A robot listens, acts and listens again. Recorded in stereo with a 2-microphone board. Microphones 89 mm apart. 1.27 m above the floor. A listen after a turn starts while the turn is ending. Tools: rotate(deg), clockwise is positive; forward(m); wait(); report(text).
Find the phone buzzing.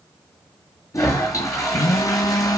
rotate(-50)
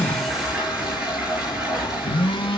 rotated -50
rotate(-85)
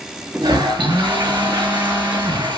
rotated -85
rotate(25)
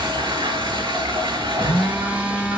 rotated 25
rotate(15)
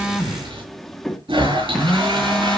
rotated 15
report("Found it: a phone buzzing, straight ahead, 1 to 2 m away.")